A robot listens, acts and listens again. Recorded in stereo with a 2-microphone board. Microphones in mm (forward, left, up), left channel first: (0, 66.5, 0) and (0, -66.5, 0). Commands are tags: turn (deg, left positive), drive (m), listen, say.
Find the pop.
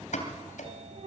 <turn deg="70"/>
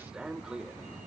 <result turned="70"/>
<listen/>
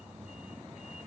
<say>I heard a pop, but can't make it out now. It was about straight ahead or 40° left.</say>